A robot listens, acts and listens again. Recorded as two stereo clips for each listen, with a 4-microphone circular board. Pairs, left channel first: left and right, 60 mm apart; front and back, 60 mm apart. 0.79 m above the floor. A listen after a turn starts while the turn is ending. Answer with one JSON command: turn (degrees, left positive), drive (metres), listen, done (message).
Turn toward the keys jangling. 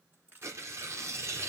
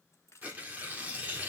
{"turn": -40}
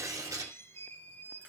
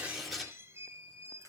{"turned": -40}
{"turn": -30}
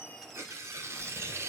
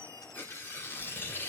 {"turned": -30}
{"listen": true}
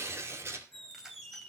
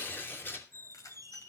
{"done": "Found it: keys jangling, straight ahead, 2 to 4 m away."}